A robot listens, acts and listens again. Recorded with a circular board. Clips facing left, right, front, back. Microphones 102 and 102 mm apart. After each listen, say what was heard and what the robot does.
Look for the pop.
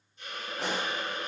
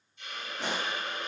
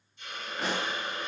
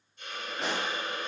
The pop: 90° left. Turn 90° left.
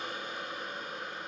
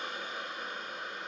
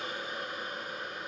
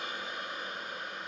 Facing where the pop came from. I can't hear it now.